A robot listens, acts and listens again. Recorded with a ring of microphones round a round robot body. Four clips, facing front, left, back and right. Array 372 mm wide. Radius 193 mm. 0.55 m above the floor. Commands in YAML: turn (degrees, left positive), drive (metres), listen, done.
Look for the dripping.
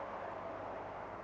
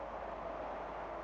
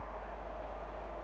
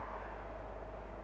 listen: true
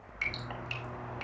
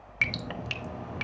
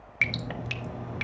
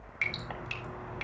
turn: 140
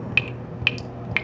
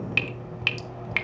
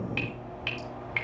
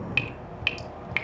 done: "Found it: dripping, straight ahead, under 1 m away."